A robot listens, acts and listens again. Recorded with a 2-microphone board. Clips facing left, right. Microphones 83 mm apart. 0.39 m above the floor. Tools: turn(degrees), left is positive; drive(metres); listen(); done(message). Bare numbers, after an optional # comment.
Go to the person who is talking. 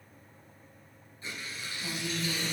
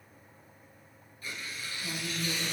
# The woman speaking: about 45° left or 135° left.
turn(45)
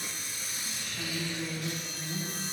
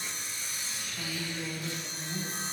drive(1.0)
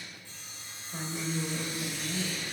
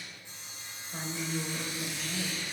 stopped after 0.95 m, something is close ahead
done("I am next to the woman speaking.")